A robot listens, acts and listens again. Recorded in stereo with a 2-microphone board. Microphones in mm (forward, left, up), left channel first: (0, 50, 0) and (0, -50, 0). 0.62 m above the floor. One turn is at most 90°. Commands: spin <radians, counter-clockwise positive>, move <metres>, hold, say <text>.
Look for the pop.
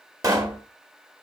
spin -0.61
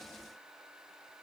hold
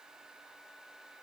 say I heard a pop, but can't make it out now. It was about straight ahead or 110° right.